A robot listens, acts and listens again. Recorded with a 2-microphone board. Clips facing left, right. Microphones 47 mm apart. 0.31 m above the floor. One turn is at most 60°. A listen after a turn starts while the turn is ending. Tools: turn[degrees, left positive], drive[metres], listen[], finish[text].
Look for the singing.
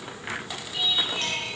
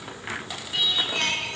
Thought: The singing: about 70° right or 110° right.
Action: turn[-60]
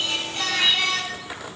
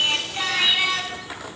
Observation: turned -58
Thought: So it is at 10° right.
Action: turn[-10]
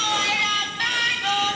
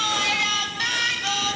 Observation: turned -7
Thought: The singing is now 15° left.
Action: turn[15]
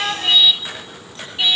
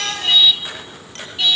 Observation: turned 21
Thought: The singing is now 20° left.
Action: turn[20]
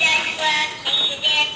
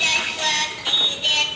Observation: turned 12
Thought: The singing is now 15° left.
Action: turn[15]
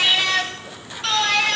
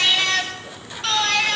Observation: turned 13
Action: finish[Facing the singing.]